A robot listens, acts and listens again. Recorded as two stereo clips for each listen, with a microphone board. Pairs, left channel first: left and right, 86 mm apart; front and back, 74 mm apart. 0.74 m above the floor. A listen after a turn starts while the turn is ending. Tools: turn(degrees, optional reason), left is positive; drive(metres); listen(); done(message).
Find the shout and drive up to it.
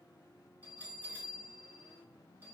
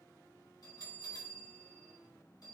listen()
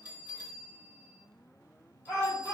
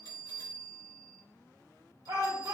turn(degrees=145, reason="The shout: 145° left.")
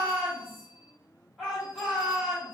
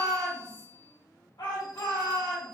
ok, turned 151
drive(metres=1.0)
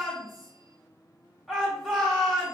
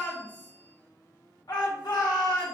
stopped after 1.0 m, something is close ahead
done("I am next to the shout.")